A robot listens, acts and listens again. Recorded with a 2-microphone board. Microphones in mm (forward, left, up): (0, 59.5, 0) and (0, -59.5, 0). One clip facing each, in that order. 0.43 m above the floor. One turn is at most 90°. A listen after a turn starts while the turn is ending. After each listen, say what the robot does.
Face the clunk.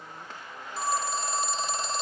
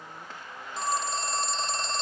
Keep listening.
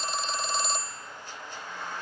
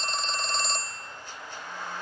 Keep listening.
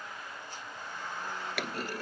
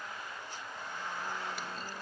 Turn 75° left.
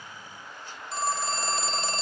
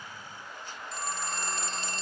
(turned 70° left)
Keep listening.
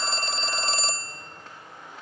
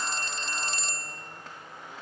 I heard a clunk, but can't make it out now. It was about 5° left or 35° left.